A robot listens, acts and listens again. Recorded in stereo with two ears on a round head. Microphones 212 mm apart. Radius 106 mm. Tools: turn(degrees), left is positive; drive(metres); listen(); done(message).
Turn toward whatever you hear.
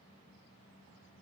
listen()
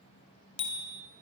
turn(degrees=25)
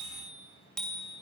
done("Found it: a bicycle bell, straight ahead, 2 to 4 m away.")